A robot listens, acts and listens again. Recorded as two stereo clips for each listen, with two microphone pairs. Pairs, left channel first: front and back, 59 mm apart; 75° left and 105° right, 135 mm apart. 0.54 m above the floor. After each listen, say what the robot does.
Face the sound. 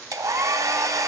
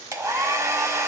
Turn 170° right.
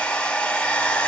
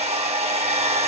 Turn 65° right.
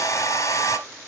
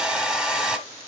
Turn 20° right.
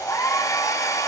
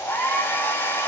Facing the hair dryer.